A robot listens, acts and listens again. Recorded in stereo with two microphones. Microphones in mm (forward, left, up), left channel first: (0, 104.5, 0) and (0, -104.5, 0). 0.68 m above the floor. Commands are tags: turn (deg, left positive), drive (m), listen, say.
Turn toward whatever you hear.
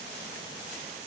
<listen/>
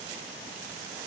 <listen/>
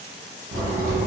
<turn deg="-90"/>
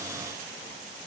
<say>Facing where the crack came from. I can't hear it now.</say>